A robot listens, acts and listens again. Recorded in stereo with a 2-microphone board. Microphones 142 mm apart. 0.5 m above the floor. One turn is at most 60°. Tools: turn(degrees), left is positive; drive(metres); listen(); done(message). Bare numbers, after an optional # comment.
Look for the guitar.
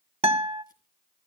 # The guitar: about 45° right or 135° right.
turn(-45)
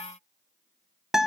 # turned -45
done("Facing the guitar, 1 to 2 m away.")